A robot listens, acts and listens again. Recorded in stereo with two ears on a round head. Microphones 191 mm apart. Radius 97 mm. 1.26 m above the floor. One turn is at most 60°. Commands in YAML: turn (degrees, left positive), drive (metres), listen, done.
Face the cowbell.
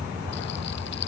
listen: true
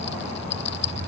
listen: true
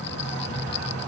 done: "I can't make out a cowbell, only a rattle."